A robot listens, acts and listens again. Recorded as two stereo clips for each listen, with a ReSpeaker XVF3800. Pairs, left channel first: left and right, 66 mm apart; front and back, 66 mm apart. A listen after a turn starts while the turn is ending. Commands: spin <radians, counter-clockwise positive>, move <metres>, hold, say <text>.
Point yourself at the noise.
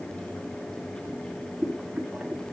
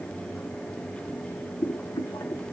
spin -0.35
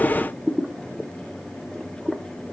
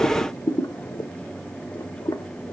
say Found it: boiling, straight ahead, 1 to 2 m away.